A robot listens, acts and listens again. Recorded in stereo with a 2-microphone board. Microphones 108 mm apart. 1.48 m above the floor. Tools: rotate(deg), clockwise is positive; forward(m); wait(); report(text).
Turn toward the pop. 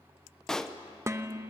rotate(-30)
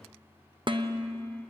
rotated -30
wait()
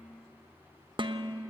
report("I heard a pop, but can't make it out now. It was about 25° right or 145° left.")